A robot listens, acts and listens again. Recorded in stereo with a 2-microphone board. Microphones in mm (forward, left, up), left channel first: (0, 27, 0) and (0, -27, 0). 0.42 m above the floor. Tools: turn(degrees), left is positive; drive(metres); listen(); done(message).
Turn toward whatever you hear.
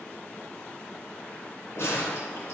turn(degrees=65)
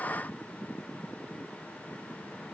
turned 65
listen()
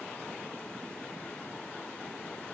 done("I heard a gunshot, but can't make it out now. It was about straight ahead or 50° left.")